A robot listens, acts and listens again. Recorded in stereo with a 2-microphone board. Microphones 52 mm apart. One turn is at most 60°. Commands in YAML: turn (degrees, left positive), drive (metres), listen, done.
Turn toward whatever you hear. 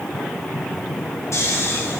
turn: 60
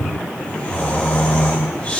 turn: 25
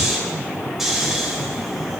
turn: -10
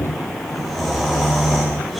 done: "Facing the snoring, 2 to 4 m away."